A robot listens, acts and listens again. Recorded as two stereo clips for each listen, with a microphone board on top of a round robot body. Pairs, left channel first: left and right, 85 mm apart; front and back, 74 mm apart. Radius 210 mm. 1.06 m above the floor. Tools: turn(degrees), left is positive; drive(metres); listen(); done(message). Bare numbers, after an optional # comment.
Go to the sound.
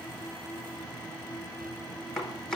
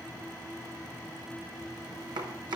# The chopping: 175° left.
turn(175)
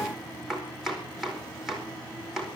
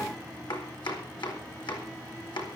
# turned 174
drive(1.0)
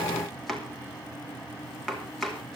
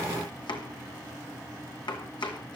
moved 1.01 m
drive(1.0)
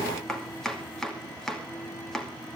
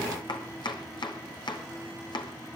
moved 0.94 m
drive(1.0)
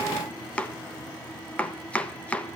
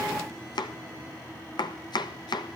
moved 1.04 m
# The chopping is now 15° left.
turn(15)
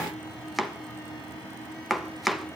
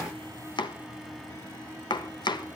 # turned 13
drive(1.0)
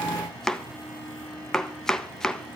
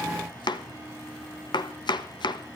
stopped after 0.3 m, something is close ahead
done("I am next to the chopping.")